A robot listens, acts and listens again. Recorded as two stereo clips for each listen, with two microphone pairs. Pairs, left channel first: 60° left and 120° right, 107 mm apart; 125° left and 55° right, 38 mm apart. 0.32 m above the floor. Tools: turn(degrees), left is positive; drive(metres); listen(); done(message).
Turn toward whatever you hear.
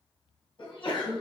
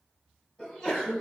turn(degrees=50)
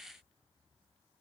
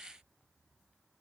done("Facing where the sneeze came from. I can't hear it now.")